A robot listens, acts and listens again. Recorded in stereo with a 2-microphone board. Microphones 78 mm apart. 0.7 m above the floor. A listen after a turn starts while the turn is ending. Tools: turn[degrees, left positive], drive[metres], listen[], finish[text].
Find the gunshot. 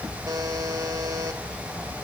Action: listen[]
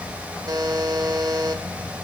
Action: listen[]
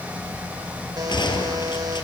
Action: turn[90]
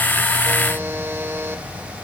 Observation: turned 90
Action: finish[Facing where the gunshot came from. I can't hear it now.]